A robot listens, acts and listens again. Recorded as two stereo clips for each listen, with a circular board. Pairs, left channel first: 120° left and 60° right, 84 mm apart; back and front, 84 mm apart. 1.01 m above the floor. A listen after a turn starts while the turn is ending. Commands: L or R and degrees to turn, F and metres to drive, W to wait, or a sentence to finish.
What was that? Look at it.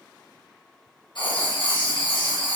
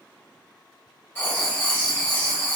L120
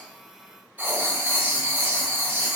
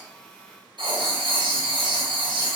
L10
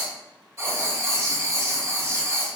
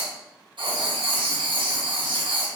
Found it: writing, straight ahead, 1 to 2 m away.